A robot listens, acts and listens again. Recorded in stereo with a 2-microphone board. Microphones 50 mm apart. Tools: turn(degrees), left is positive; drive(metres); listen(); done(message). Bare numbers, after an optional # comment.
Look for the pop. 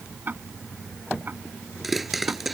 turn(-30)
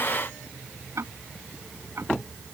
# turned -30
listen()
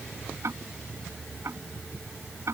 done("I heard a pop, but can't make it out now. It was about 25° left or 145° right.")